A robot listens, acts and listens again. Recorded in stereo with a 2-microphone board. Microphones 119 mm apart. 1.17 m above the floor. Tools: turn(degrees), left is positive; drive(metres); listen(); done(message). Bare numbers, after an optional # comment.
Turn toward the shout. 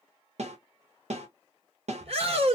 # The shout: about 60° right or 120° right.
turn(-60)
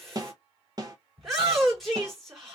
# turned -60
done("Facing the shout.")